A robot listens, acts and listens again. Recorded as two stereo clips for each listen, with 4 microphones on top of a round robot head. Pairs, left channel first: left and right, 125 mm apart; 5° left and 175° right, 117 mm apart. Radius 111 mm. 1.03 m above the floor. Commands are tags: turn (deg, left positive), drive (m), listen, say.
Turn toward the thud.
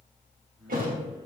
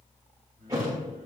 <turn deg="-105"/>
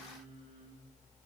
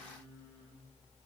<say>I heard a thud from this way, but can't make it out now.</say>